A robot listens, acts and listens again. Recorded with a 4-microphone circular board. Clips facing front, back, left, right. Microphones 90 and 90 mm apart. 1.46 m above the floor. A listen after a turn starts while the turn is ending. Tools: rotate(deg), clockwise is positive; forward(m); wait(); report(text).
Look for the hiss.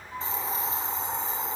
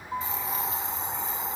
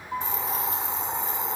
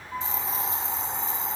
rotate(-60)
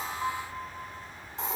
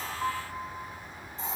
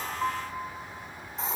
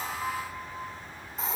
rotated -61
report("Found it: a hiss, straight ahead.")